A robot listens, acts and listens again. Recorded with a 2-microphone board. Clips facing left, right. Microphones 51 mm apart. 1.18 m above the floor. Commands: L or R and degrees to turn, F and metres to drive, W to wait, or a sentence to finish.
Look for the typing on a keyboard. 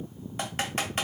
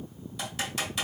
L40
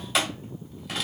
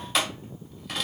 Facing the typing on a keyboard, 1 to 2 m away.